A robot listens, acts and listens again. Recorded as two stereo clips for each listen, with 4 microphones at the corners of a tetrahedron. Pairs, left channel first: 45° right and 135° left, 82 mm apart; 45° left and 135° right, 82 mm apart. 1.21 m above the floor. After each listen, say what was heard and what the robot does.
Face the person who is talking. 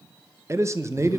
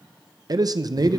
The man speaking: 170° right. Turn 170° right.
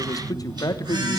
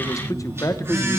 Facing the man speaking.